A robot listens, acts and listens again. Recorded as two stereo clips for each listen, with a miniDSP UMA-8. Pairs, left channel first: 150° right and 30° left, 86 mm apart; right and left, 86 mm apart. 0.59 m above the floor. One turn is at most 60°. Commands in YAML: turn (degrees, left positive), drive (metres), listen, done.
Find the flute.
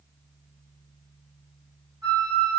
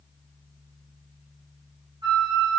turn: 60
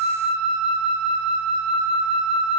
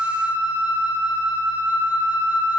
turn: 25
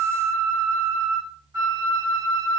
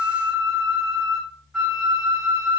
done: "Found it: a flute, straight ahead, 1 to 2 m away."